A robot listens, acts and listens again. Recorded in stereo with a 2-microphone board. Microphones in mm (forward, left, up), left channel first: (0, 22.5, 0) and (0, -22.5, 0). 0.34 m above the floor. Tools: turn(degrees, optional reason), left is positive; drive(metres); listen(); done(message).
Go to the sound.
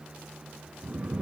turn(degrees=-35, reason="The snoring: about 35° right or 145° right.")
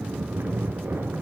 turn(degrees=-115, reason="So it is at 115° right.")
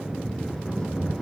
turn(degrees=15, reason="The snoring is now 15° left.")
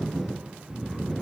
drive(metres=1.0)
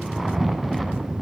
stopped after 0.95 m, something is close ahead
done("Arrived at the snoring, straight ahead.")